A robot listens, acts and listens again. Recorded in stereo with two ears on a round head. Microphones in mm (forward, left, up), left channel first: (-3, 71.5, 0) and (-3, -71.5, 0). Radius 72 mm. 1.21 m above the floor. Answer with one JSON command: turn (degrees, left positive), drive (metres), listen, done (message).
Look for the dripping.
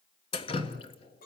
{"turn": 35}
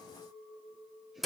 {"done": "Facing the dripping, 1 to 2 m away."}